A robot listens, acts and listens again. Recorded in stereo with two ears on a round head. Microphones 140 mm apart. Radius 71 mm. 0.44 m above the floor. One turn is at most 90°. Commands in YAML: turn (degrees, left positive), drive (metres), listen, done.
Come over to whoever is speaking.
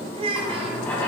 turn: -35
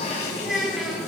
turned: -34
drive: 1.0
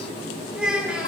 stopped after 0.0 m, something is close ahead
done: "Something is in my way. I am facing the child speaking but have not reached it."